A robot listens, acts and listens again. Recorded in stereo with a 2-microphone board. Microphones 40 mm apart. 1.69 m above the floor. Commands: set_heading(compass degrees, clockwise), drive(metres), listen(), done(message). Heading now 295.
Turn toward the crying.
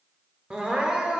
set_heading(315)
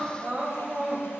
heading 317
set_heading(92)
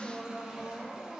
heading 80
set_heading(90)
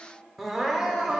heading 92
done("Found it: crying, straight ahead.")